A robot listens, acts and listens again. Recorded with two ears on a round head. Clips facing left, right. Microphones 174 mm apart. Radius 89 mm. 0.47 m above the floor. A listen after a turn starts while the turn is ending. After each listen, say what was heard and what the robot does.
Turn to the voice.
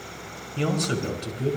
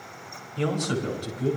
The man speaking: about 30° left or 150° left. Turn 30° left.
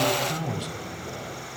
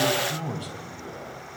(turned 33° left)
So it is at 120° left. Turn 120° left.
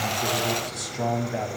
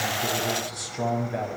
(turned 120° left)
Found it: a man speaking, straight ahead, over 4 m away.